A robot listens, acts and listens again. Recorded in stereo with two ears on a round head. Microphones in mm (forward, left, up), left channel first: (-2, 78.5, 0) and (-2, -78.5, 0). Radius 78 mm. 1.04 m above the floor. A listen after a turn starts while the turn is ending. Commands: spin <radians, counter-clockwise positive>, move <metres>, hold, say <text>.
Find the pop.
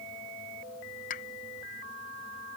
spin 0.87
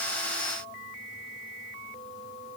hold
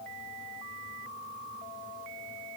say I heard a pop, but can't make it out now. It was about straight ahead or 80° left.